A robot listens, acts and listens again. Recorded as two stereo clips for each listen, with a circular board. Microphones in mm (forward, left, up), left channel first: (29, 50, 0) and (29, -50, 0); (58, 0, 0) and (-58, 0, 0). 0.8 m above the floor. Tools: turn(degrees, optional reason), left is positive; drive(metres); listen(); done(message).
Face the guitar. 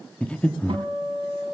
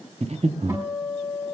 turn(degrees=-115, reason="The guitar: 115° right.")
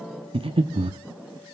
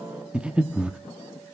listen()
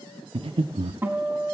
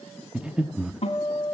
turn(degrees=-20, reason="The guitar is now 20° right.")
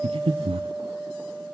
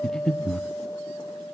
done("Found it: a guitar, straight ahead, over 4 m away.")